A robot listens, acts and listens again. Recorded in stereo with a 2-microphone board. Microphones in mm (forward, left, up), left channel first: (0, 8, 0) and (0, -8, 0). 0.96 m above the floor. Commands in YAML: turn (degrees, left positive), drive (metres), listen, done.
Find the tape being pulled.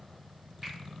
listen: true
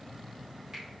listen: true
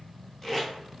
turn: 30
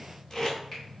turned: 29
turn: 145
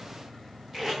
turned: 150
turn: -10
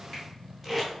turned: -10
done: "Found it: tape being pulled, straight ahead, 1 to 2 m away."